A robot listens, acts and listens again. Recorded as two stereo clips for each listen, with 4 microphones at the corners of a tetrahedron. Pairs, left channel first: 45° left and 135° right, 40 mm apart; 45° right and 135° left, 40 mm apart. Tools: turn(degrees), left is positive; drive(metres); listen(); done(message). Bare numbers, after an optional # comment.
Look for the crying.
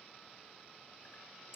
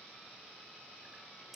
listen()
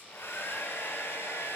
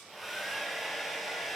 listen()
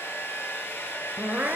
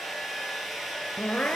# The crying: 100° right.
turn(-100)
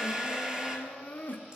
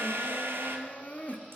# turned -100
done("Facing the crying.")